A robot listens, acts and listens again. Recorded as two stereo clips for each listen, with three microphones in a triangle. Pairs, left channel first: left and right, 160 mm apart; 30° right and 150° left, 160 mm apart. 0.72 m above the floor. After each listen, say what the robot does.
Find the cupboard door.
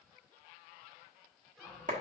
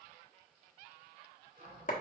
Turn 180° left.
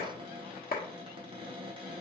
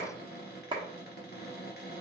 Turn 30° right.
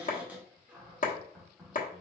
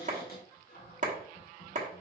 Turn 10° right.
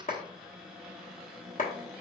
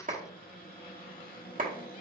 Facing the cupboard door.